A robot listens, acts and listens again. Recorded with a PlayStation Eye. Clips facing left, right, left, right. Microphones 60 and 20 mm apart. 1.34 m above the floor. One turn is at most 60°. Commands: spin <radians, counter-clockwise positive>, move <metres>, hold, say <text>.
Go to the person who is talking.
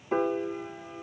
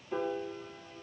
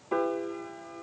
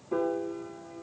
hold
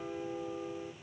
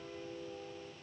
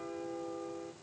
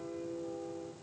hold
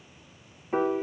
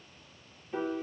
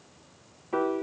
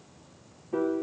say I can't make out anyone speaking to turn to.